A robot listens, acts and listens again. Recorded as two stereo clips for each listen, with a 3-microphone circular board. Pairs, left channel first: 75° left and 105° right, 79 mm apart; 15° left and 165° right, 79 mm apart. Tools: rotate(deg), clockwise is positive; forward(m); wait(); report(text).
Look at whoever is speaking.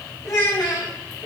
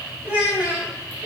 rotate(-130)
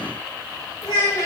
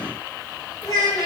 rotate(-50)
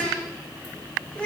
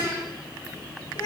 report("Facing the child speaking.")